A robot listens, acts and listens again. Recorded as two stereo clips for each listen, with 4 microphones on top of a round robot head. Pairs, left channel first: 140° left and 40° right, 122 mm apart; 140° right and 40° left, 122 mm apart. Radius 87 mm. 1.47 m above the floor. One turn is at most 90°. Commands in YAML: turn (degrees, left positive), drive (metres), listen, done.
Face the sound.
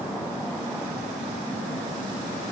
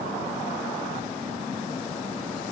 listen: true
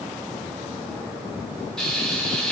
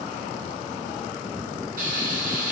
turn: 55
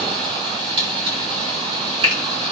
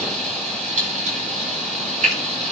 turn: 10
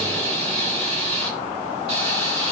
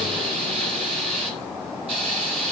done: "Facing the frying, over 4 m away."